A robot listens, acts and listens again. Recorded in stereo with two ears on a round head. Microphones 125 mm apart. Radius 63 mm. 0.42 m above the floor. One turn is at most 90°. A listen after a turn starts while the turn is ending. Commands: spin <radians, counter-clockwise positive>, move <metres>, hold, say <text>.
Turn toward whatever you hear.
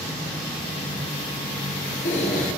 spin 0.96
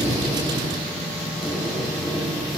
say Found it: a squeak, straight ahead, 2 to 4 m away.